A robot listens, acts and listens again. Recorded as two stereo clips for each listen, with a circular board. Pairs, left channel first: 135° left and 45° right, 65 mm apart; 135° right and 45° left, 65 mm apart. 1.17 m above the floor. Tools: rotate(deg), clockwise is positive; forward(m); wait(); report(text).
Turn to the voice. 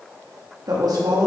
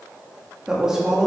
rotate(40)
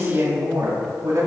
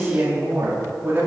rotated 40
rotate(10)
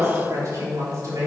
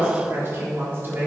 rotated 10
rotate(10)
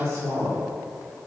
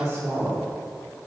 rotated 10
report("Found it: a woman speaking, straight ahead.")